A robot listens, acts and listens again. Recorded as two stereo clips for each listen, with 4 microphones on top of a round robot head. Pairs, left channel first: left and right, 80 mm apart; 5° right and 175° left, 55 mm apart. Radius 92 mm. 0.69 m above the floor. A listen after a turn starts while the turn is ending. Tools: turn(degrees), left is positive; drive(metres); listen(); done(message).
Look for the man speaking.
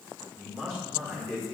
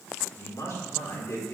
turn(degrees=15)
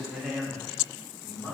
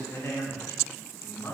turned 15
turn(degrees=25)
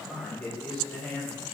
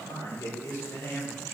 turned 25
turn(degrees=20)
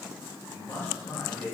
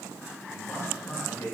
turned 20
turn(degrees=25)
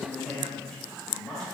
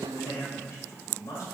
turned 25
done("Facing the man speaking, 2 to 4 m away.")